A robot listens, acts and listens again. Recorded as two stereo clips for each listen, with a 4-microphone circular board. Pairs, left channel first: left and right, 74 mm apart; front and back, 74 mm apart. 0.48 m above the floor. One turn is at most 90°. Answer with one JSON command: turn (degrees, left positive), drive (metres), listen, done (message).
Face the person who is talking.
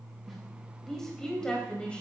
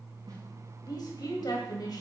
{"turn": 15}
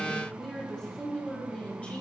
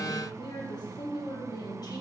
{"turn": 20}
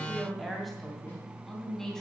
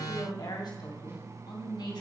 {"turn": 10}
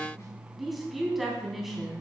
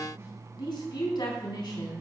{"done": "Facing the woman speaking."}